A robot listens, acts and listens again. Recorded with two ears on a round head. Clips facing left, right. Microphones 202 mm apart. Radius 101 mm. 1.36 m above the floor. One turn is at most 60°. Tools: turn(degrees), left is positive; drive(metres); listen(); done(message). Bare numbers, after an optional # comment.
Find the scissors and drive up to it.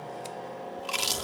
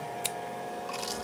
turn(-60)
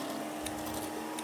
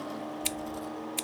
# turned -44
# So it is at 50° right.
turn(-50)
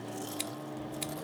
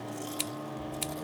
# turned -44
# The scissors is now 10° right.
turn(-10)
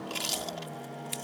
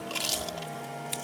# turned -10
drive(1.0)
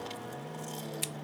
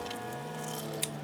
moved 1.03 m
drive(1.0)
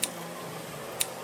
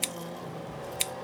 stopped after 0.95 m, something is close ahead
done("Arrived at the scissors, straight ahead.")